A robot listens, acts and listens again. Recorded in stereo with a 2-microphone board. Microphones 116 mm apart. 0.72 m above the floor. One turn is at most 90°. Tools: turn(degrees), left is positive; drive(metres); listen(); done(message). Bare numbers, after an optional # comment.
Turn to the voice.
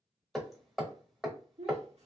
# The child speaking: about 70° right or 110° right.
turn(-70)
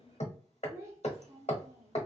# So it is at 25° right.
turn(-25)
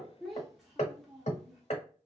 done("Found it: a child speaking, straight ahead.")